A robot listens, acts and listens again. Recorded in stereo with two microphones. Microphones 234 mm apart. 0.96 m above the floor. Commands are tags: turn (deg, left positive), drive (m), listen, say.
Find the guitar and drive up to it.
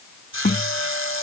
<turn deg="40"/>
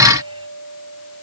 <turn deg="100"/>
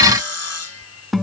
<drive m="1.0"/>
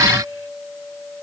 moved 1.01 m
<drive m="1.0"/>
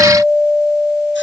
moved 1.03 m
<drive m="1.0"/>
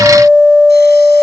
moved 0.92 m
<drive m="1.0"/>
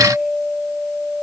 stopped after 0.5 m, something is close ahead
<say>Arrived at the guitar, straight ahead.</say>